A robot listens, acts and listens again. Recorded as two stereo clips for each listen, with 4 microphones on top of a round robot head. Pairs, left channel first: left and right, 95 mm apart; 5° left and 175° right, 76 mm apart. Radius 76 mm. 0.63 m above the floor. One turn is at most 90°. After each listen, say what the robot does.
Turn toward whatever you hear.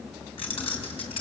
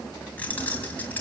Turn 70° left.
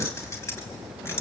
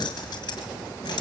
Turn 25° left.
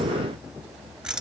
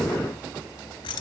Turn 10° right.
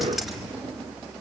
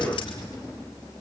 Found it: keys jangling, straight ahead.